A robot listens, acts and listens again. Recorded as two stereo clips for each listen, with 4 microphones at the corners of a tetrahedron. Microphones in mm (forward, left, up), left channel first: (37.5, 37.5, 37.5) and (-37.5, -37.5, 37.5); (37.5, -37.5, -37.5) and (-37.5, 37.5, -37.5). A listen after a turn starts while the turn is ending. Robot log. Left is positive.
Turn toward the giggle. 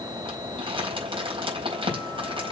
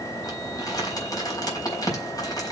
cmd idle
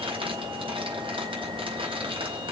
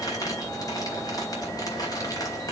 cmd idle
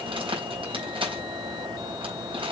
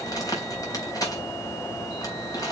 end: I can't make out a giggle, only crumpling.